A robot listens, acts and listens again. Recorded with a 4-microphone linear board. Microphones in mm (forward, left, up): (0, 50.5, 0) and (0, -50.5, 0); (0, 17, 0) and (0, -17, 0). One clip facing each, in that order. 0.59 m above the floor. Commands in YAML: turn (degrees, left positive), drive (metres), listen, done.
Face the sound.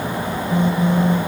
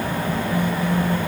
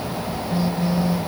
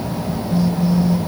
turn: 20
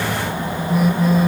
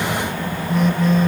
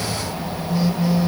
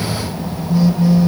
done: "Facing the phone buzzing."